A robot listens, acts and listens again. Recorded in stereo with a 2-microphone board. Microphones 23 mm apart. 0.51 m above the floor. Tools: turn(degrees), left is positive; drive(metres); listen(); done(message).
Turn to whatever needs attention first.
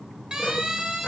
turn(degrees=-30)
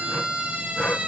turn(degrees=-120)
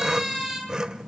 done("Facing the siren, over 4 m away.")